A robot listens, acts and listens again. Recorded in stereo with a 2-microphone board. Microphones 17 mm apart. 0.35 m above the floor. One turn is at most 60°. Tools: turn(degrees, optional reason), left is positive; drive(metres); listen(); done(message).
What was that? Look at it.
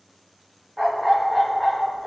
turn(degrees=30)
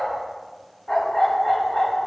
turn(degrees=60, reason="So it is at 145° left.")
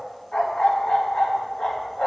turn(degrees=60, reason="The dog barking is now 70° left.")
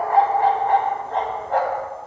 turn(degrees=10, reason="The dog barking is now 10° left.")
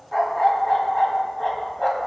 done("Found it: a dog barking, straight ahead.")